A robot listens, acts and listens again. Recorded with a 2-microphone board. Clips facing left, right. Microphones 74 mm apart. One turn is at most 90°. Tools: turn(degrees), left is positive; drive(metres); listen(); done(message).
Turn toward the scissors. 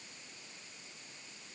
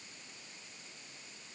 listen()
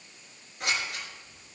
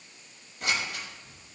turn(degrees=90)
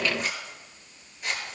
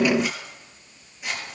done("Facing the scissors, over 4 m away.")